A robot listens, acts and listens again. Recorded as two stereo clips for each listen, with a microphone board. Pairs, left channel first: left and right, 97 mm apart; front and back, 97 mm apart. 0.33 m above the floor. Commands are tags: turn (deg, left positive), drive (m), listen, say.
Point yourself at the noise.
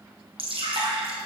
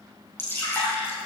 <turn deg="-65"/>
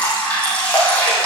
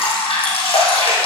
<turn deg="15"/>
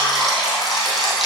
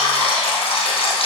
<say>Found it: dripping, straight ahead.</say>